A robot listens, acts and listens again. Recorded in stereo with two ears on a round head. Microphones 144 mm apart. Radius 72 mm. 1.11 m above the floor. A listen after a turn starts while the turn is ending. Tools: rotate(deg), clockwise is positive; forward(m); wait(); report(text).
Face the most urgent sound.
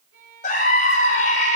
rotate(-50)
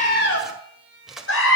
rotate(-85)
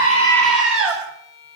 report("Facing the scream.")